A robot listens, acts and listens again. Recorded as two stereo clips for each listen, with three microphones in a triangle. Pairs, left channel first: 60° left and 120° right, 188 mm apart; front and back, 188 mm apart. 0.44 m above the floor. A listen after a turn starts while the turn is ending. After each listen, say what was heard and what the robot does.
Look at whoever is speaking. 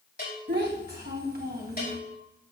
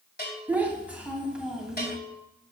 The child speaking: 95° right. Turn 95° right.
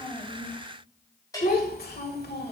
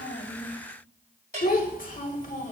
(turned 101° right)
The child speaking is now 45° left. Turn 45° left.
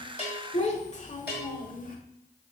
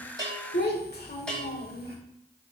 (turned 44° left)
The child speaking is now 25° left. Turn 25° left.
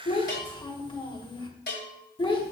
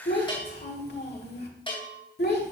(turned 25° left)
Found it: a child speaking, straight ahead.